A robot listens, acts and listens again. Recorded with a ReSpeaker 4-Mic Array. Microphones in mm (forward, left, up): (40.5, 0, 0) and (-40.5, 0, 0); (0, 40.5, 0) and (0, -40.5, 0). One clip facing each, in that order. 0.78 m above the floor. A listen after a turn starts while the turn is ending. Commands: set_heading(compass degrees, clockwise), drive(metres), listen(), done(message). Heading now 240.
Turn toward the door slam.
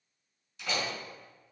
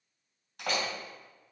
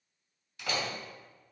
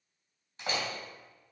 set_heading(25)
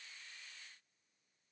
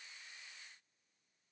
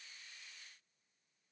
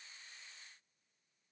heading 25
done("I heard a door slam from this way, but can't make it out now.")